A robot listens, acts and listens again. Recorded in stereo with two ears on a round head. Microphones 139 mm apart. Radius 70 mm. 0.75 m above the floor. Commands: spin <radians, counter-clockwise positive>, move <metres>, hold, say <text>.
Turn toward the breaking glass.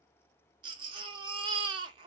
hold
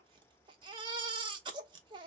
hold
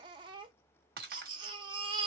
spin -1.13
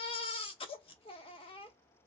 hold
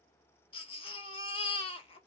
say I heard breaking glass, but can't make it out now. It was about straight ahead or 50° right.